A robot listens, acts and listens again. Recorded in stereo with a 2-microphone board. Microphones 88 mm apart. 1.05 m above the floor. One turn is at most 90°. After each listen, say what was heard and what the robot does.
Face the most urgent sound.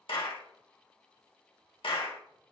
Keep listening.
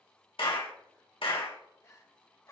The crying: about 40° left or 140° left. Turn 40° left.
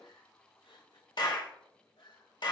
So it is at 100° left. Turn 90° left.
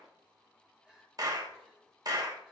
Found it: crying, straight ahead.